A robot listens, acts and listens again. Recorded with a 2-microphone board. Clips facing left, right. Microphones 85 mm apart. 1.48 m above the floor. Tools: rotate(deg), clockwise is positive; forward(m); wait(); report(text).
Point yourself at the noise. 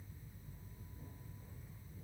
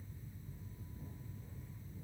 wait()
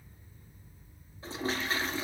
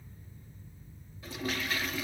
rotate(-35)
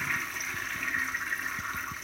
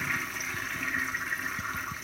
report("Facing the toilet flushing, 1 to 2 m away.")